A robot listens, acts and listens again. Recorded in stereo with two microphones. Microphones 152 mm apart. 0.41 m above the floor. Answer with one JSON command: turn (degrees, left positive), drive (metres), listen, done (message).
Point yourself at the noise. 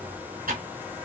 {"turn": -90}
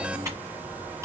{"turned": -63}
{"turn": -20}
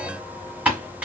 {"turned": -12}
{"turn": -10}
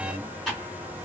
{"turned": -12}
{"done": "Facing the typing on a keyboard."}